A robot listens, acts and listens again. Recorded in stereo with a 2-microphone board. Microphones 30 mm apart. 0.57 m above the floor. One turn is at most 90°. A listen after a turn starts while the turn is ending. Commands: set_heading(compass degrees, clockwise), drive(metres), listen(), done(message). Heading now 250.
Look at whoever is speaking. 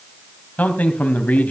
set_heading(185)
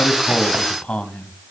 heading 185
set_heading(135)
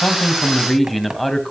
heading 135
done("Facing the man speaking.")